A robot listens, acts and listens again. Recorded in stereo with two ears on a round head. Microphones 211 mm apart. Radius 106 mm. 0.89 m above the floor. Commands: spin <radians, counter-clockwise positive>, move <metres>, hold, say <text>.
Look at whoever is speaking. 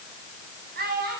spin -0.70
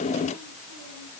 hold
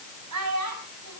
spin -1.66
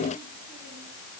hold
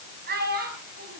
spin -0.79
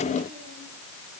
hold
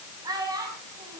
spin -0.26
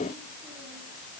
hold
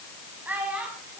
say Facing the child speaking.